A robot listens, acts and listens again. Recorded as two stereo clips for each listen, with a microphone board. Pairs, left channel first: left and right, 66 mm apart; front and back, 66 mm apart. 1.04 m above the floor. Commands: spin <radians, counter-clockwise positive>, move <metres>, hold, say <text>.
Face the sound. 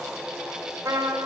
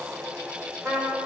spin -2.01
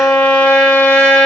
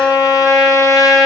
spin 0.26
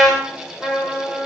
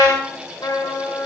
say Found it: a trumpet, straight ahead.